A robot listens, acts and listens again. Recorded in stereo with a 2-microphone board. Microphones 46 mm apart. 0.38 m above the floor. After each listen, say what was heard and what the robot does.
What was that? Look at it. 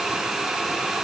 Keep listening.
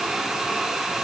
Keep listening.
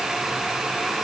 I can't make out anything to turn to.